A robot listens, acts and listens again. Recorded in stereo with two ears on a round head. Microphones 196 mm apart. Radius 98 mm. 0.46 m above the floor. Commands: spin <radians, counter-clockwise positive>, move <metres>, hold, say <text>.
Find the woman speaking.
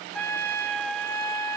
hold
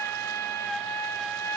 hold
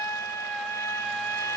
say I can't make out a woman speaking, only a trumpet.